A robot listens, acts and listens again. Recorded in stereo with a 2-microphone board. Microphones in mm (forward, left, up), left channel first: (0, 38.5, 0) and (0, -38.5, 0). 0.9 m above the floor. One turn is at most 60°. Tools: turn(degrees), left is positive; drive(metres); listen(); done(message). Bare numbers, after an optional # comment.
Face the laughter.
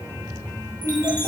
# The laughter: about 65° right or 115° right.
turn(-60)
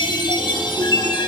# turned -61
listen()
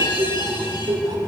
# So it is at 80° right.
turn(-60)
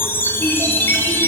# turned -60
# Nothing new. It was at 20° right.
turn(-20)
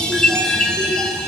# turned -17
listen()
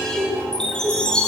# The laughter is now 30° right.
turn(-30)
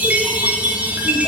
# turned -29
listen()
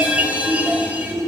done("Facing the laughter, 2 to 4 m away.")